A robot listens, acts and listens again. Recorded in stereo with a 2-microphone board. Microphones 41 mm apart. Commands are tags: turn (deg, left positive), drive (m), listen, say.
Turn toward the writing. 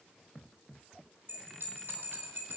<listen/>
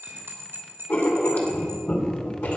<turn deg="50"/>
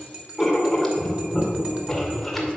<say>Found it: writing, straight ahead, 2 to 4 m away.</say>